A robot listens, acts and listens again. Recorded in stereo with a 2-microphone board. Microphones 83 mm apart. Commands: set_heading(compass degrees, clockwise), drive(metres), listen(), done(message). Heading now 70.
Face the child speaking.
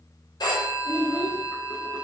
set_heading(110)
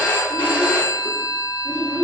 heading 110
set_heading(150)
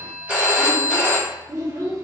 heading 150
set_heading(190)
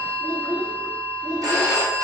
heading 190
set_heading(210)
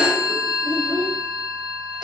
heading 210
done("Facing the child speaking, 1 to 2 m away.")